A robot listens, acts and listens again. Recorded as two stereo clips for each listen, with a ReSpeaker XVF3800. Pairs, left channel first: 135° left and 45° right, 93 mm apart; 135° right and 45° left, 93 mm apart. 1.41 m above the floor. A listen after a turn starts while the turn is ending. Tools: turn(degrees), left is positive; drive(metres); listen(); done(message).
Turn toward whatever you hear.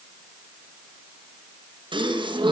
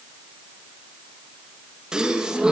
turn(degrees=-35)
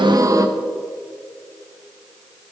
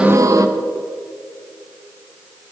done("Facing the gasp.")